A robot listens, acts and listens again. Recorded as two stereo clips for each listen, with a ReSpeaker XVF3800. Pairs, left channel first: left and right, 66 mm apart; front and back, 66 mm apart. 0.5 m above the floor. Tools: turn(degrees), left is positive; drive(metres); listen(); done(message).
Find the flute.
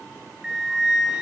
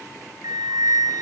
turn(degrees=-170)
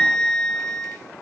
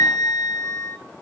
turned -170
turn(degrees=10)
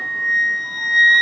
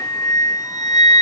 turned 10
done("Facing the flute.")